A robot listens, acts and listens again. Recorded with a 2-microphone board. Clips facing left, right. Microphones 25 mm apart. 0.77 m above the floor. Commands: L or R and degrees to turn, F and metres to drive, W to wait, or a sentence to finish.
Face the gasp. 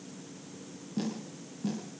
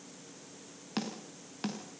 W
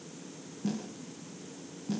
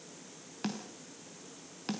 W
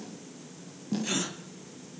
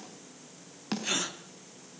R30
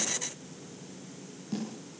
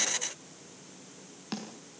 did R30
W
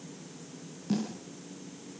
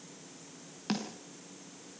I heard a gasp, but can't make it out now. It was about 20° left or 140° right.